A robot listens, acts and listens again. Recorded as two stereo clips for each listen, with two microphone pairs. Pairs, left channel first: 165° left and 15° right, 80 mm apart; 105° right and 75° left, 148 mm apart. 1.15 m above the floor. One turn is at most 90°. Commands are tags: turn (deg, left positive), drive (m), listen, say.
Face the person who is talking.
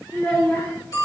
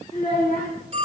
<turn deg="-90"/>
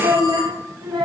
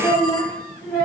<turn deg="-40"/>
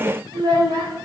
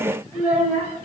<say>Facing the child speaking, 2 to 4 m away.</say>